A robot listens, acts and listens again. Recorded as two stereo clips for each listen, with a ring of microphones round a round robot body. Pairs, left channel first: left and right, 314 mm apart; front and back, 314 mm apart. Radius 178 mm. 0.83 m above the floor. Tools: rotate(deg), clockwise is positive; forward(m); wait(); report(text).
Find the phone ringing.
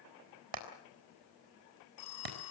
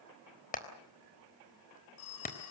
rotate(-50)
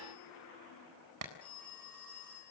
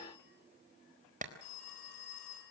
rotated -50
report("Facing the phone ringing.")